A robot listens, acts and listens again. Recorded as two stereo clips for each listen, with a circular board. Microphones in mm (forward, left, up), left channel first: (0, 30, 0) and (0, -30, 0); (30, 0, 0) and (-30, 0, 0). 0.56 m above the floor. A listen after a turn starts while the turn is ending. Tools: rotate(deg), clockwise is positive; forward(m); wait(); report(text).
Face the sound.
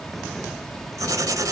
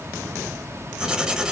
rotate(105)
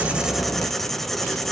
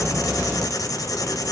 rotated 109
report("Found it: writing, straight ahead.")